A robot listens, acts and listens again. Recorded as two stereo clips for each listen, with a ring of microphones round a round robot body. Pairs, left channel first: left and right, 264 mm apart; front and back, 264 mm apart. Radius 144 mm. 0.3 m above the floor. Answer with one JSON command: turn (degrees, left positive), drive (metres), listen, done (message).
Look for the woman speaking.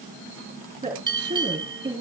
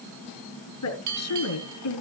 {"turn": -15}
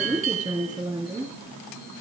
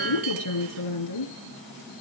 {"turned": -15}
{"done": "Facing the woman speaking."}